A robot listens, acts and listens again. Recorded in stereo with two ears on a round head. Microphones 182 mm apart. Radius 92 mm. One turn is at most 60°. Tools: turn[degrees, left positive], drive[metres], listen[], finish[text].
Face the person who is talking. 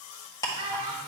Thought: The child speaking: about 30° right or 150° right.
Action: turn[-30]
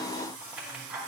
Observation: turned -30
Action: listen[]
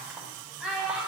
Action: finish[Facing the child speaking.]